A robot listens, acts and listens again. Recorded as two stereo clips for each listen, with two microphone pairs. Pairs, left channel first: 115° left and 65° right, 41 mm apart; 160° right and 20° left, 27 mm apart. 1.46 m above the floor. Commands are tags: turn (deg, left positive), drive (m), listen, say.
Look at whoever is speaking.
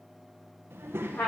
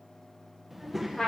<turn deg="-60"/>
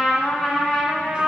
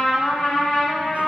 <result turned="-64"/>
<listen/>
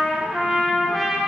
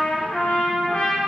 <listen/>
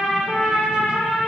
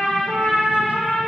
<say>Facing where the child speaking came from. I can't hear it now.</say>